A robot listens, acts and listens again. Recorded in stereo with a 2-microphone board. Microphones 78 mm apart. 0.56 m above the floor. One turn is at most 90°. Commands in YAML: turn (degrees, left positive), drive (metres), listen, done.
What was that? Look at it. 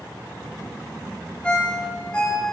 turn: 30
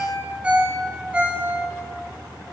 turn: -15
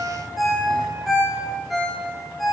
done: "Facing the ringtone, 1 to 2 m away."